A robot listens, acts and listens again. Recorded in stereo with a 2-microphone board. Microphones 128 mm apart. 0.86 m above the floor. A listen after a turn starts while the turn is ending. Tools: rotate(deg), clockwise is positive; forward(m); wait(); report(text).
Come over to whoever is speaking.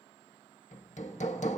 wait()
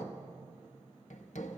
wait()
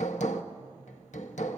report("I can't make out anyone speaking, only hammering.")